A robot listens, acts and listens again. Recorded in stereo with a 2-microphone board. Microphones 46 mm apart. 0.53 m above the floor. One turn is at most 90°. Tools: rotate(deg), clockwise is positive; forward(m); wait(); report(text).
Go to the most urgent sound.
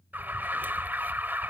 rotate(45)
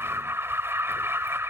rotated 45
rotate(85)
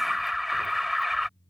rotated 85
forward(1.0)
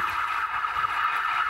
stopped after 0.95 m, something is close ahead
report("Arrived at the alarm, straight ahead.")